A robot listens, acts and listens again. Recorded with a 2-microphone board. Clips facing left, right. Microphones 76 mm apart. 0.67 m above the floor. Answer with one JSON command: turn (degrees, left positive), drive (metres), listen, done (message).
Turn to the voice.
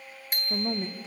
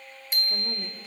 {"turn": 25}
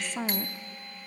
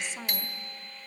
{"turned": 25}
{"turn": 130}
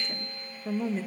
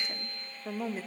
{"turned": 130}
{"turn": -10}
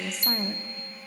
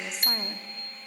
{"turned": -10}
{"done": "Found it: a woman speaking, straight ahead."}